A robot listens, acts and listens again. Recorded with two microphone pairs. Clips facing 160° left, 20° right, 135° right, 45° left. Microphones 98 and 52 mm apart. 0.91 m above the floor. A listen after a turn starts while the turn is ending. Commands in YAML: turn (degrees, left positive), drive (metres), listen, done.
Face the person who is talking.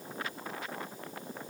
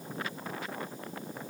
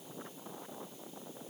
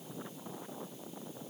listen: true
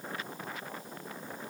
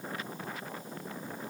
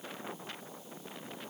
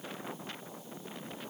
listen: true
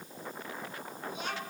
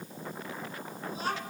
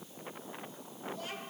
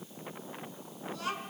turn: 30
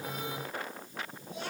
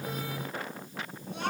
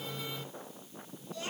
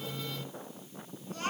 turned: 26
done: "Facing the child speaking, over 4 m away."